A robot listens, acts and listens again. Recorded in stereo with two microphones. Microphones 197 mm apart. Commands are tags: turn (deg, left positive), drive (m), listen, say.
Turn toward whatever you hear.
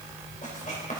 <turn deg="40"/>
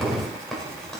<say>Found it: writing, straight ahead.</say>